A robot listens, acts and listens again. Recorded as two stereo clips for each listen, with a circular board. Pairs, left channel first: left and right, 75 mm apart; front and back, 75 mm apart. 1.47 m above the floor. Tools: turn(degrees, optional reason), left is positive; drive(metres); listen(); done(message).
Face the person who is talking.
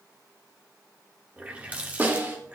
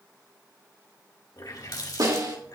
listen()
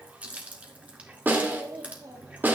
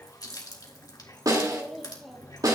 turn(degrees=-90, reason="The child speaking: 90° right.")
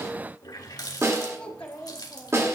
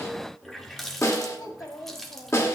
turn(degrees=20, reason="The child speaking is now 20° left.")
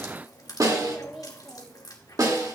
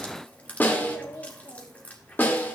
done("Found it: a child speaking, straight ahead, 1 to 2 m away.")